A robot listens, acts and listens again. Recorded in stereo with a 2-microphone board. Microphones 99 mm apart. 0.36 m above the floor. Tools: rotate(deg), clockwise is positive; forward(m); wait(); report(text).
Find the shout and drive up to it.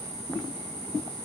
wait()
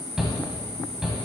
rotate(30)
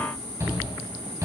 rotate(145)
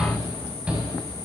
rotate(10)
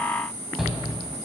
forward(1.0)
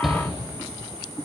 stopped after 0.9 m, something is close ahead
report("Arrived at the shout, straight ahead.")